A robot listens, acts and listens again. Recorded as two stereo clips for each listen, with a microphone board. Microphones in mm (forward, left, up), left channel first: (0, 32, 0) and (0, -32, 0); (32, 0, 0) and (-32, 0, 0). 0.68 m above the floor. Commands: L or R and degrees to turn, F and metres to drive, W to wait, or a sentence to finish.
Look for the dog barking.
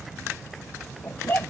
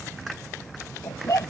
L35
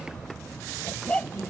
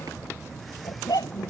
L20
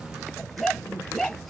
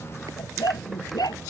L10
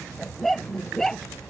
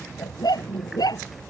Found it: a dog barking, straight ahead.